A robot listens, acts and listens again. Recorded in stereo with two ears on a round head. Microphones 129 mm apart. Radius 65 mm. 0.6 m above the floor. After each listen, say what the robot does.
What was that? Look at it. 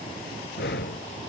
Turn 90° left.
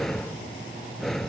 Found it: breathing, straight ahead.